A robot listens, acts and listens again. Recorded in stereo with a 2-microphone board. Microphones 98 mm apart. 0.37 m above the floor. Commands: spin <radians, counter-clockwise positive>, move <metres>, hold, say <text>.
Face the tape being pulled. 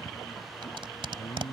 spin -1.05
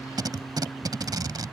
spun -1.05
spin -0.87
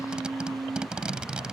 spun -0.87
spin -0.17
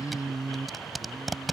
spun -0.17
say Found it: tape being pulled, straight ahead.